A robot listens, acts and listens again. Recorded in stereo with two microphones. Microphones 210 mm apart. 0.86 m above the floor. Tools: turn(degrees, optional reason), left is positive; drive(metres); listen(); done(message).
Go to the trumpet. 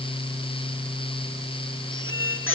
listen()
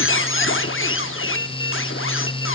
listen()
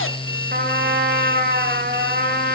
turn(degrees=-50, reason="The trumpet: about 50° right or 130° right.")
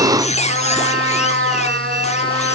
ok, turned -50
turn(degrees=-75, reason="So it is at 75° right.")
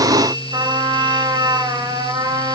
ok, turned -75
turn(degrees=-20, reason="The trumpet is now 20° right.")
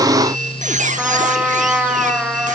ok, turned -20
drive(metres=1.0)
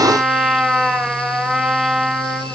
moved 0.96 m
drive(metres=1.0)
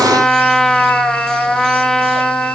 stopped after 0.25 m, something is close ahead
done("Arrived at the trumpet, straight ahead.")